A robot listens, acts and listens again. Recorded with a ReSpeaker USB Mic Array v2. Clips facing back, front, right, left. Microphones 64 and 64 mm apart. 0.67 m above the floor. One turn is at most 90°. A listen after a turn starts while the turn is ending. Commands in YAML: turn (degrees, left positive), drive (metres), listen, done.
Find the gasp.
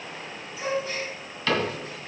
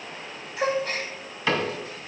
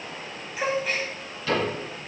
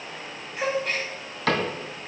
done: "Facing the gasp."